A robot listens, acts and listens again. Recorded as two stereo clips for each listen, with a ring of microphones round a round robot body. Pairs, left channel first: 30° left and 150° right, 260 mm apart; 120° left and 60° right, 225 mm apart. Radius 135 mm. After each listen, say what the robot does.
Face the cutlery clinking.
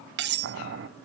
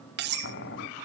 Turn 105° right.
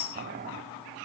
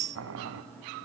Facing the cutlery clinking.